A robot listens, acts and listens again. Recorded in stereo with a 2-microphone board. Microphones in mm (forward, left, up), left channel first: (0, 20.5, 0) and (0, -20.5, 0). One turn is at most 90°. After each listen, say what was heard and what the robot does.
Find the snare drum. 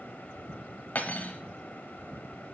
Keep listening.
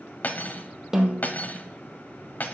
Turn 30° right.
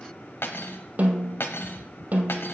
So it is at 135° right. Turn 90° right.
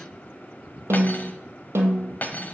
The snare drum is now 80° right. Turn 80° right.
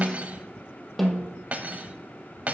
Found it: a snare drum, straight ahead, 1 to 2 m away.